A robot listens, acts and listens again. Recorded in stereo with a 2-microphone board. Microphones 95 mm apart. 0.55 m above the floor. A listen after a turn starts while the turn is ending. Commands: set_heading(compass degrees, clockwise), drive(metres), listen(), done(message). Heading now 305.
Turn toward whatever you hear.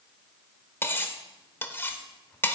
set_heading(280)
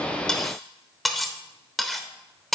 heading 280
done("Facing the cutlery clinking, under 1 m away.")